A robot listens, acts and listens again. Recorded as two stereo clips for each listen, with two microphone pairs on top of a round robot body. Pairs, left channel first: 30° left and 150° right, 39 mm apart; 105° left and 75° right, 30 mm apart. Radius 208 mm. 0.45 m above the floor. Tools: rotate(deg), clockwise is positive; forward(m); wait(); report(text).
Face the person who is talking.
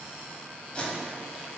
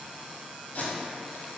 wait()
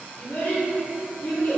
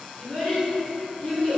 rotate(-40)
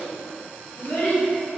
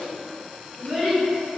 rotate(-20)
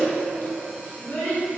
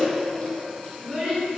report("Facing the child speaking, 1 to 2 m away.")